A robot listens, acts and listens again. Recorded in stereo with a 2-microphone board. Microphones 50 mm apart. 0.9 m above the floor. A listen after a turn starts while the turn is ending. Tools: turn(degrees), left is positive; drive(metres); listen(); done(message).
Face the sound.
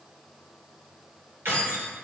turn(degrees=-65)
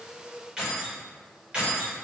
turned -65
turn(degrees=-25)
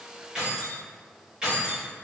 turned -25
turn(degrees=-20)
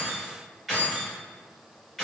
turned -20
done("Facing the keys jangling, 2 to 4 m away.")